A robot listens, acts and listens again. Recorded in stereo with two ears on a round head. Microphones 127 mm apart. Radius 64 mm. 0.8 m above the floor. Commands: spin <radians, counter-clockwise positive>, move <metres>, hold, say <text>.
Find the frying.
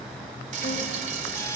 spin -0.96
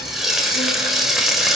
say Facing the frying, 2 to 4 m away.